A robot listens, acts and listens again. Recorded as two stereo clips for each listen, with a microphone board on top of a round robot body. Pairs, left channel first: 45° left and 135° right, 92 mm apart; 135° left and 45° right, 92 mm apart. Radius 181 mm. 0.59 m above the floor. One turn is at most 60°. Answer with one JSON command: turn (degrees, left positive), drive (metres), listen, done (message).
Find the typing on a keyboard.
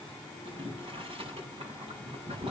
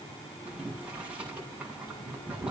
{"listen": true}
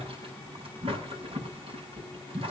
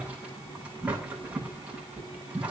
{"listen": true}
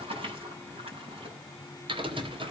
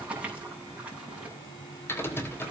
{"turn": -60}
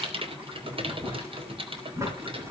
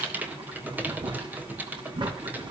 {"turn": -60}
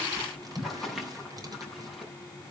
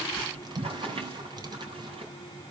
{"turn": -55}
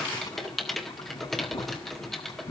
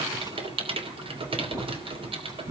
{"turn": -40}
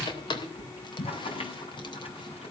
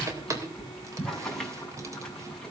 {"turn": 10}
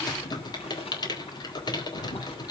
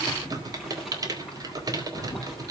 {"done": "Found it: typing on a keyboard, straight ahead."}